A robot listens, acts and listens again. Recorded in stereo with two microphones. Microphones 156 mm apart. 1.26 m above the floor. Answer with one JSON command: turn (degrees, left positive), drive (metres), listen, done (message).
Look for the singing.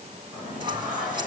{"turn": -30}
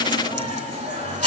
{"turn": -135}
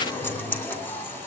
{"turn": 10}
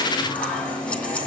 {"turn": 10}
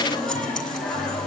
{"done": "Facing the singing."}